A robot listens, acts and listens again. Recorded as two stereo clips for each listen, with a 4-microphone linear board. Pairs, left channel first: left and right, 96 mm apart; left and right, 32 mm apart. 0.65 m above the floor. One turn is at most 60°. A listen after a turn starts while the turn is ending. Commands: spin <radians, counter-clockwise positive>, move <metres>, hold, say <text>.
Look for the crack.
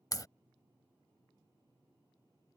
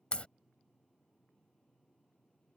spin 0.70
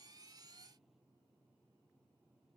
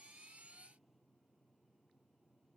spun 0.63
hold
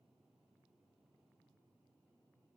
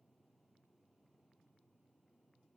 say I heard a crack, but can't make it out now. It was about straight ahead or 105° left.